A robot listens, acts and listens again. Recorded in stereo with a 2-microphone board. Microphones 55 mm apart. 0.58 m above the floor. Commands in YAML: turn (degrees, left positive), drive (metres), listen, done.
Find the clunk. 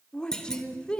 turn: 30
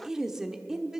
listen: true
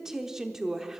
done: "I heard a clunk, but can't make it out now. It was about 20° right or 140° left."